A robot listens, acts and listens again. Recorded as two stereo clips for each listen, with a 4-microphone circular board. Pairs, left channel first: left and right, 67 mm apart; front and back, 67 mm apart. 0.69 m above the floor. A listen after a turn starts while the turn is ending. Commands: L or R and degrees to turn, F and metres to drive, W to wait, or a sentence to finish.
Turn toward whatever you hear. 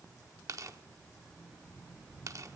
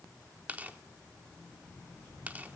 R115
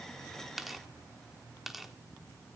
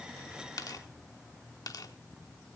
Found it: tearing paper, straight ahead, 1 to 2 m away.